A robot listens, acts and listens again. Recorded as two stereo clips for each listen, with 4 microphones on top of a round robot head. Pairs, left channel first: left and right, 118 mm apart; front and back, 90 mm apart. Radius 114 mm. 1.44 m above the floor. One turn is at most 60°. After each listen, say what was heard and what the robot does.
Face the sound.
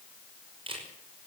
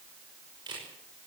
The camera shutter: 135° right. Turn 60° right.
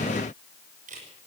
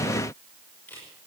The camera shutter is now 80° right. Turn 60° right.
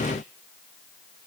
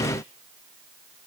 Nothing new. It was at 20° right. Turn 20° right.
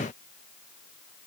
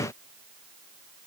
Keep listening.
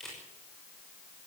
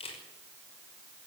Facing the camera shutter.